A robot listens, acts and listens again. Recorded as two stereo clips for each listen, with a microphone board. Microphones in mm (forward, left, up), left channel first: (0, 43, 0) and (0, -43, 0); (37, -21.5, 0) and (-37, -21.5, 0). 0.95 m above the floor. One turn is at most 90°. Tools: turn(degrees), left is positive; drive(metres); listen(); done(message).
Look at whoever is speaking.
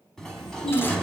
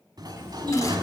turn(degrees=90)
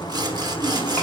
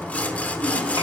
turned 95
turn(degrees=20)
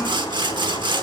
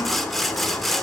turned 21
listen()
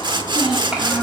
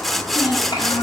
turn(degrees=-15)
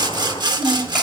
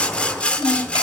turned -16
done("Facing the child speaking, 2 to 4 m away.")